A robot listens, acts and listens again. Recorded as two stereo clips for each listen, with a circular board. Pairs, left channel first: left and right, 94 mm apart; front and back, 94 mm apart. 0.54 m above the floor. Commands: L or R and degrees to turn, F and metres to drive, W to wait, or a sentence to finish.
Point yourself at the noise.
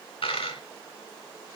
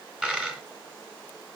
L100
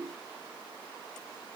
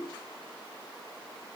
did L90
L10
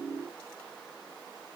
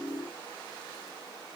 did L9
Facing where the dropped coin came from. I can't hear it now.